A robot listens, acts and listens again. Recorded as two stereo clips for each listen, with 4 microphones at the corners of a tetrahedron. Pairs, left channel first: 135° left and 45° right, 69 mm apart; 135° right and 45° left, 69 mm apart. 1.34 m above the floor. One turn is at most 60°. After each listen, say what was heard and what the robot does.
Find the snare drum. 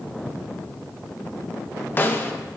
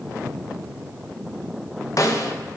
The snare drum: 165° right. Turn 60° right.
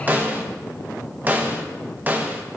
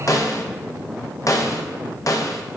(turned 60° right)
The snare drum is now 105° right. Turn 60° right.
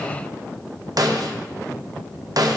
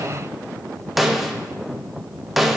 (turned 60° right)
The snare drum is now 40° right. Turn 40° right.
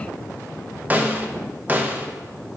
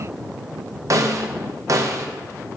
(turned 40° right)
The snare drum is now 15° left. Turn 15° left.
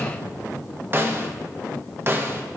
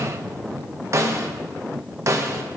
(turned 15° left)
The snare drum is now 10° left. Turn 10° left.
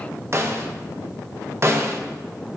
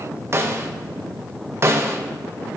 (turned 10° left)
Found it: a snare drum, straight ahead.